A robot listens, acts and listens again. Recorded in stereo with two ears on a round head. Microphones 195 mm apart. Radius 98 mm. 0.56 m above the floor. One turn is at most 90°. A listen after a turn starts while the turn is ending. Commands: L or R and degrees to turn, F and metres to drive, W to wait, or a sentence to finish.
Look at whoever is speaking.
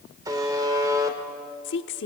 L55
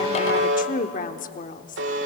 L45
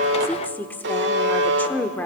L10
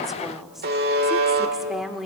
Found it: a woman speaking, straight ahead.